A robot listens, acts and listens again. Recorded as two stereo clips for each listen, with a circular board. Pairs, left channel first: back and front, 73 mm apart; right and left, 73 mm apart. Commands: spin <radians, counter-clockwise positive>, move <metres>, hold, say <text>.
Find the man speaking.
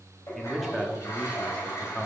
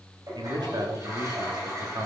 spin 1.92
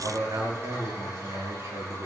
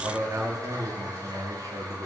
spin 0.87
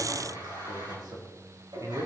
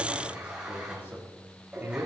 spin 0.52
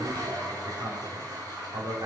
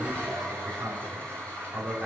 say Facing the man speaking, 2 to 4 m away.